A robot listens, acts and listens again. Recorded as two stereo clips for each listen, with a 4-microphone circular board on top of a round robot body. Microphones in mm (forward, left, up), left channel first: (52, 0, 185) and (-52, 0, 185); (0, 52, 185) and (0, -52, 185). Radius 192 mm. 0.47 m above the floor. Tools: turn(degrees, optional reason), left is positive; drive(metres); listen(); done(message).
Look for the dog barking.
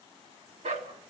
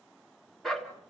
turn(degrees=180, reason="The dog barking: straight behind.")
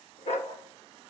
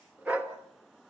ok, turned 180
turn(degrees=-15, reason="The dog barking is now 15° right.")
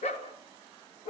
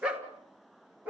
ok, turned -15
turn(degrees=-15, reason="The dog barking is now 15° right.")
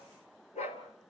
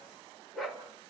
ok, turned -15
done("Facing the dog barking.")